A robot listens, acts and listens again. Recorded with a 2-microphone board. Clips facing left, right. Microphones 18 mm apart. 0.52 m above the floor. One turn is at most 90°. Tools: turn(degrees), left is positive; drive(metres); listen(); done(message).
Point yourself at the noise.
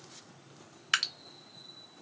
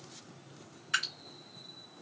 turn(degrees=70)
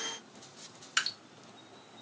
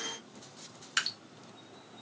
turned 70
done("Facing the dripping.")